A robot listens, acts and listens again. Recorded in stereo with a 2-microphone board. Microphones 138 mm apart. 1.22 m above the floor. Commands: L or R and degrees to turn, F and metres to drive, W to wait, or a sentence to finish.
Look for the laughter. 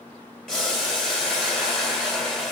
W
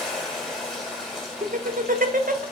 R90
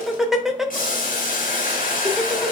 Found it: laughter, straight ahead.